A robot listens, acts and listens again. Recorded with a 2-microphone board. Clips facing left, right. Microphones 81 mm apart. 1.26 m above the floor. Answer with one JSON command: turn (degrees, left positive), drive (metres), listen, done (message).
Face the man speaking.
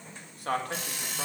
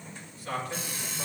{"turn": 60}
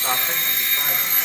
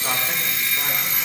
{"listen": true}
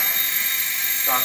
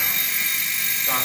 {"turn": 30}
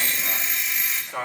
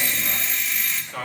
{"turn": 10}
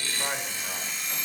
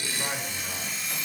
{"listen": true}
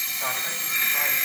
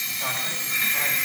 {"listen": true}
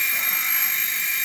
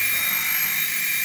{"done": "I heard a man speaking from this way, but can't make it out now."}